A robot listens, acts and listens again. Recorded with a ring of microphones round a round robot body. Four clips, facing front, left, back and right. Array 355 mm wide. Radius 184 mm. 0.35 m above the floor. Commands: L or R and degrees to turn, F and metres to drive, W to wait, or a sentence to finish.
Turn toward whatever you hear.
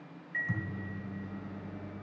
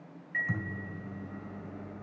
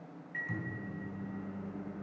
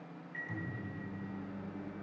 L70
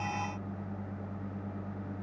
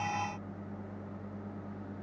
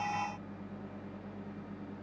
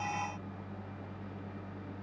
Found it: a microwave, straight ahead.